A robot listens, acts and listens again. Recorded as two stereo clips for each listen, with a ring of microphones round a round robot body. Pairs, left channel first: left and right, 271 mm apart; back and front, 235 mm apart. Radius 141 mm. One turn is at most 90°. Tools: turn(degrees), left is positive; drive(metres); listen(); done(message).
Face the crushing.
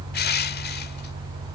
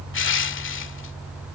turn(degrees=90)
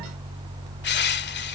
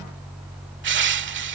turn(degrees=40)
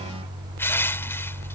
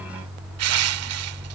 turn(degrees=10)
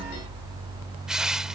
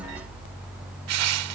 done("Facing the crushing.")